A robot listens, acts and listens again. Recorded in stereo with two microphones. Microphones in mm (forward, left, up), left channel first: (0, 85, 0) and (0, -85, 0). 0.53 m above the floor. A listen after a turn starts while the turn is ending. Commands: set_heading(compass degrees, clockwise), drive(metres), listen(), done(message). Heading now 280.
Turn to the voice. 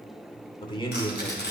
set_heading(250)
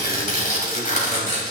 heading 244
listen()
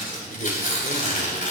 set_heading(134)
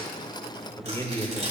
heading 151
set_heading(131)
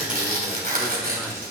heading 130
listen()
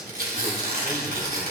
listen()
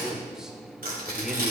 done("Found it: a man speaking, straight ahead.")